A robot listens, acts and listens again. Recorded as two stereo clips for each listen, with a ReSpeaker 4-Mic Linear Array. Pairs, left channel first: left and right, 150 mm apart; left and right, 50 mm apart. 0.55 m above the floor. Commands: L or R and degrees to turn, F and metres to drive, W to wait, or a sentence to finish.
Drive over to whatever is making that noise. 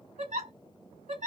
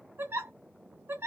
R50
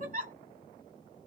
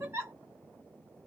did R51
R70
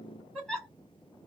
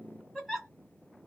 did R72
F1.0
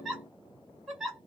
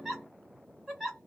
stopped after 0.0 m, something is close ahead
Something is in my way. I am facing the giggle but have not reached it.